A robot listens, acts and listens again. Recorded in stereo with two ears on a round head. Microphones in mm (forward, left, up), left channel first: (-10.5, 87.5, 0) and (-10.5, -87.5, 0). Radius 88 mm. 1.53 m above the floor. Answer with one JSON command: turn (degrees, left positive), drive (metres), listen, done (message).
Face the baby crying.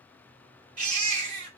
{"turn": -45}
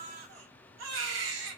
{"turn": -85}
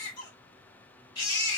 {"turn": 25}
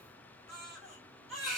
{"done": "Found it: a baby crying, straight ahead, 2 to 4 m away."}